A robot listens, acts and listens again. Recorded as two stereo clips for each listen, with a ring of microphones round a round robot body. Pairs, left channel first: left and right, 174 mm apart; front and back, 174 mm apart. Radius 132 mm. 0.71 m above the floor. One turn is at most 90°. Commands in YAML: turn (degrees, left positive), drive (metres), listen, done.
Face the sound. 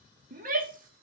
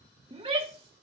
turn: -90
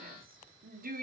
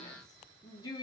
turn: -70
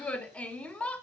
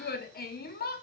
turn: 10
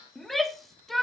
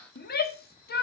done: "Found it: a shout, straight ahead, 1 to 2 m away."